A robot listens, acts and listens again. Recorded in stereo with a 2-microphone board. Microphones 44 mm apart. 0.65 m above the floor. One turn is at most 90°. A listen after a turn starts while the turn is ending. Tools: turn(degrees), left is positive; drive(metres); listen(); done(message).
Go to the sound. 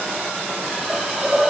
turn(degrees=-30)
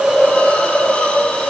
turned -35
turn(degrees=25)
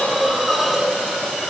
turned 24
drive(metres=1.0)
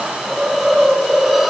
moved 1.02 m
drive(metres=1.0)
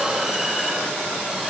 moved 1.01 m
listen()
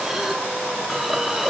turn(degrees=-10)
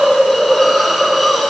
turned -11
drive(metres=1.0)
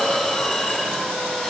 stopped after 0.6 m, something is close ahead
done("I am next to the hiss.")